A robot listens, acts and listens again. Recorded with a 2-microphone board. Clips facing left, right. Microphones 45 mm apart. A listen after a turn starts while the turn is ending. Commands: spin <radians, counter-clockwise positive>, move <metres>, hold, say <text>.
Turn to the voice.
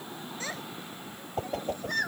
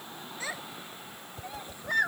spin -0.35
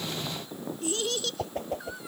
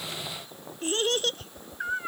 spin -2.27
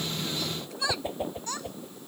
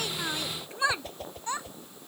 spin -0.35
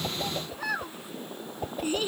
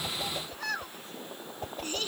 spin 0.26
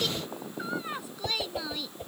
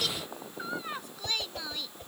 say Found it: a child speaking, straight ahead.